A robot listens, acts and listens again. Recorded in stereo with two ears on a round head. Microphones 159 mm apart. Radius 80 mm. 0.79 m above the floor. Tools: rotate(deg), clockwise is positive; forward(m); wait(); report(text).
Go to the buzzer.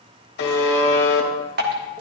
rotate(-60)
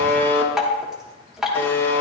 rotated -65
rotate(-15)
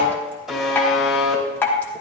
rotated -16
forward(1.0)
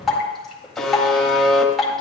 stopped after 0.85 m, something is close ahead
report("I am next to the buzzer.")